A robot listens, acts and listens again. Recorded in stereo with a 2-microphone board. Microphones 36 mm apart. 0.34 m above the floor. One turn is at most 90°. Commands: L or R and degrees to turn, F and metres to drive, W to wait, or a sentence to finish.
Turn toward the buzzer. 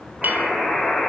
L30
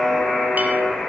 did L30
L90
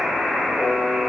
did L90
L35
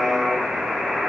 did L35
Found it: a buzzer, straight ahead.